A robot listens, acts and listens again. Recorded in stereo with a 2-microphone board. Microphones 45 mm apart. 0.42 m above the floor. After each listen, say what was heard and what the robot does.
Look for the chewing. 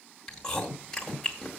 Turn 30° left.
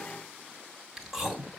So it is at 10° right. Turn 10° right.
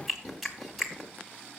Found it: chewing, straight ahead, 2 to 4 m away.